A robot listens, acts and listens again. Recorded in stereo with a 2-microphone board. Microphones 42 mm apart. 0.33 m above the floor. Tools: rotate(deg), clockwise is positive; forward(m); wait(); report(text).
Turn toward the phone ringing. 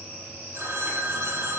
rotate(75)
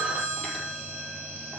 rotate(30)
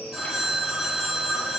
report("Found it: a phone ringing, straight ahead, over 4 m away.")